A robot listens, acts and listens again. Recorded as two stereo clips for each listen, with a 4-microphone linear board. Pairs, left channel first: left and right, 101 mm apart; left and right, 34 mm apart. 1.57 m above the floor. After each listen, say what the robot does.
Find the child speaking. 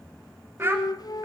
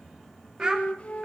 Turn 30° right.
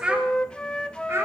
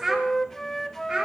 Turn 25° right.
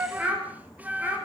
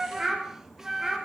Turn 20° right.
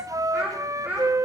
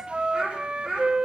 Turn 15° right.
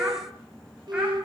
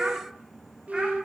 Keep listening.
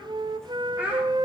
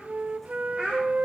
Turn 15° right.
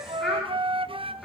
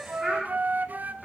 Found it: a child speaking, straight ahead, 2 to 4 m away.